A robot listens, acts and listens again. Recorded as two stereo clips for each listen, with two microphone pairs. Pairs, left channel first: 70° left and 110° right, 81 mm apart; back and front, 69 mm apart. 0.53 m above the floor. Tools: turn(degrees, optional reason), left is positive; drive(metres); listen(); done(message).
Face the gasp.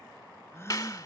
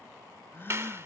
turn(degrees=125, reason="The gasp: 125° left.")
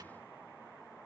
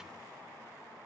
done("Facing where the gasp came from. I can't hear it now.")